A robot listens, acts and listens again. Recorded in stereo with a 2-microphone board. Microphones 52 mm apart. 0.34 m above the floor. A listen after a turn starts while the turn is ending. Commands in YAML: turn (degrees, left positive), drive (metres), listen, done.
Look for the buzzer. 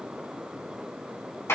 listen: true
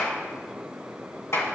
listen: true
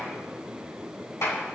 done: "I can't make out a buzzer to turn to."